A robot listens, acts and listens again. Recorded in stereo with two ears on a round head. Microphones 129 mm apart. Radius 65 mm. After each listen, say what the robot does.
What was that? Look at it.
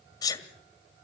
Turn 25° left.
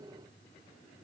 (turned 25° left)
Keep listening.
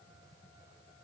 I heard a sneeze, but can't make it out now. It was about straight ahead or 130° left.